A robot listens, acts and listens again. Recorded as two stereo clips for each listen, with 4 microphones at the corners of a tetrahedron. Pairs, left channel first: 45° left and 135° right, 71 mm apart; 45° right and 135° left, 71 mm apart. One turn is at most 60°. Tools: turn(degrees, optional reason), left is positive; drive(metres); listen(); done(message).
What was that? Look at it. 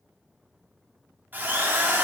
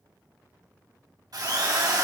turn(degrees=60, reason="The drill: 160° left.")
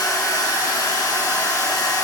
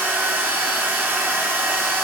turn(degrees=60, reason="The drill is now 75° left.")
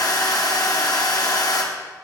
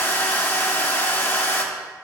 turn(degrees=10, reason="The drill is now 10° left.")
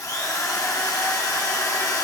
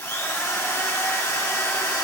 done("Facing the drill, 1 to 2 m away.")